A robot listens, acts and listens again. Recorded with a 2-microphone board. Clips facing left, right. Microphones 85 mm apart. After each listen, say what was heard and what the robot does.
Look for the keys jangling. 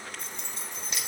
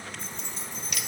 The keys jangling: about 60° left or 120° left. Turn 60° left.
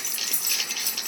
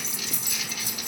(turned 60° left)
So it is at 60° left. Turn 60° left.
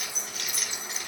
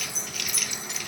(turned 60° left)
Found it: keys jangling, straight ahead, over 4 m away.